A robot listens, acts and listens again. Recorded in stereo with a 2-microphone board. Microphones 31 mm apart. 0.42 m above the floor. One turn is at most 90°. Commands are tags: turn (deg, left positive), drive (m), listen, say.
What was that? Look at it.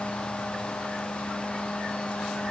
<listen/>
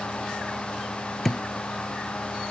<turn deg="30"/>
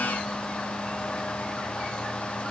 <listen/>
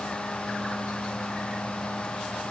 <say>I heard a thud, but can't make it out now. It was about 20° right or 140° left.</say>